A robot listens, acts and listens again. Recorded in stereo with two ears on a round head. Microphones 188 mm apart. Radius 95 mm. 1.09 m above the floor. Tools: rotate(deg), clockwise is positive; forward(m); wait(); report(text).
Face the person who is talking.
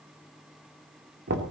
wait()
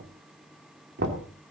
wait()
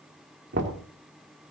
report("I can't make out anyone speaking, only knocking.")